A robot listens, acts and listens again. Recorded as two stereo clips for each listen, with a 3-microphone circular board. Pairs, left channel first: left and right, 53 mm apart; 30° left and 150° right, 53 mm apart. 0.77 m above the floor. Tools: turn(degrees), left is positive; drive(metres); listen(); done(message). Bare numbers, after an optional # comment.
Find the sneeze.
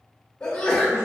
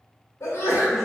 # The sneeze: 20° left.
turn(20)
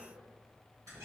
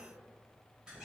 done("Facing where the sneeze came from. I can't hear it now.")